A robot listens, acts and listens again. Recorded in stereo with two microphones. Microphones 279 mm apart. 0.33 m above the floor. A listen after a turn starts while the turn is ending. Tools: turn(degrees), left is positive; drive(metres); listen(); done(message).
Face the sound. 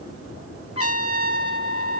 turn(degrees=55)
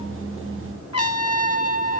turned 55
turn(degrees=65)
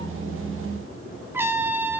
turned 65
turn(degrees=-10)
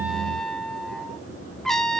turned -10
done("Found it: a trumpet, straight ahead, 1 to 2 m away.")